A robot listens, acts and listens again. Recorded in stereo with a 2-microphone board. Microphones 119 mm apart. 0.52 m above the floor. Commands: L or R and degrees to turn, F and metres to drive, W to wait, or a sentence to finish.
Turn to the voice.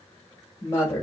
L20
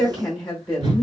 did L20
Facing the woman speaking.